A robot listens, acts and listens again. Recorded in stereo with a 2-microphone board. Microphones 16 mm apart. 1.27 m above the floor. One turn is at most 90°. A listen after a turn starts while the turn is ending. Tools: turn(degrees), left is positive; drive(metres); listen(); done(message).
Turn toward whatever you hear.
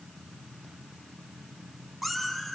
turn(degrees=-30)
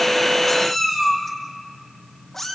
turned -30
turn(degrees=30)
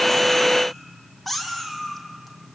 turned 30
turn(degrees=10)
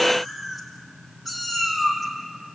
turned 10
done("Found it: a cat meowing, straight ahead.")